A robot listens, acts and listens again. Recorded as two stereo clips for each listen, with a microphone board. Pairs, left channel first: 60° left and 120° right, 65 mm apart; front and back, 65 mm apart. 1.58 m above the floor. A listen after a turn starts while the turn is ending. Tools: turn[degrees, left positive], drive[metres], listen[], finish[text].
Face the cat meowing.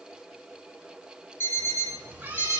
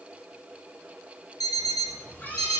Thought: The cat meowing: 60° right.
Action: turn[-60]
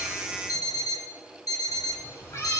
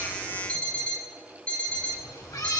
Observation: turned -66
Thought: The cat meowing is now 25° left.
Action: turn[25]
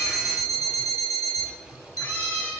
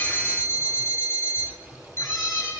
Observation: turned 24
Thought: The cat meowing is now 10° left.
Action: turn[10]
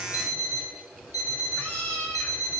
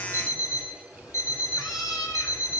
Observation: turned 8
Action: finish[Found it: a cat meowing, straight ahead, over 4 m away.]